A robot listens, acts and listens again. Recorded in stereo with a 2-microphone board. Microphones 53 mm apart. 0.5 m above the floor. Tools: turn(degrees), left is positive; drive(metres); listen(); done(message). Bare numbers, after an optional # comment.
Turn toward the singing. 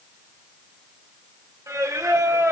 turn(-90)
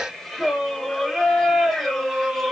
done("Facing the singing.")